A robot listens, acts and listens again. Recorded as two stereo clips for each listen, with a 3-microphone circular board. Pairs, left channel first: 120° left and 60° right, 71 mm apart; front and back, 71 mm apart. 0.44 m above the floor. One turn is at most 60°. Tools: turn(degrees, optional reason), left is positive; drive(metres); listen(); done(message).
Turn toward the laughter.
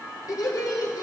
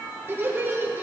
turn(degrees=60, reason="The laughter: 125° left.")
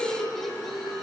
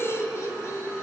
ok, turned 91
turn(degrees=35, reason="The laughter is now 35° left.")
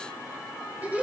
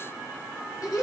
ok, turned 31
done("Facing the laughter.")